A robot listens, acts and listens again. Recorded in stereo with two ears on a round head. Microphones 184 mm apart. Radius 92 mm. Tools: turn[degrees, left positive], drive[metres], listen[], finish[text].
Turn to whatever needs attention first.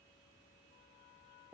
Action: listen[]
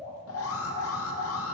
Action: turn[90]
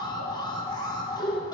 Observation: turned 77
Thought: So it is at 20° left.
Action: turn[20]
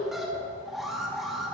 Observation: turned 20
Action: finish[Facing the alarm, 1 to 2 m away.]